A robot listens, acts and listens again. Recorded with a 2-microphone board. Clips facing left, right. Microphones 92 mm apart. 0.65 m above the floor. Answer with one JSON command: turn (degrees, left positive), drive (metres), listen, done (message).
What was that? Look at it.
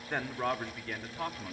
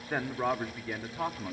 {"turn": -15}
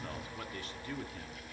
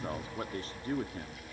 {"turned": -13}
{"turn": -40}
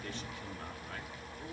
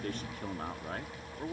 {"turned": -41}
{"turn": -40}
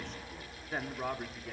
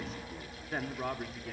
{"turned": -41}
{"turn": 10}
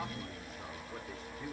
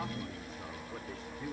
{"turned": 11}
{"done": "Facing the man speaking."}